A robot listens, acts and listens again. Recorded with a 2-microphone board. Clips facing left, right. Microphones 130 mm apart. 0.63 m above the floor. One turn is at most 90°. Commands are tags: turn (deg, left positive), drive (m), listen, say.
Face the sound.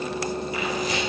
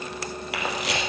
<turn deg="-90"/>
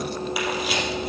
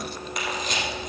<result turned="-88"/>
<say>Facing the camera shutter, 2 to 4 m away.</say>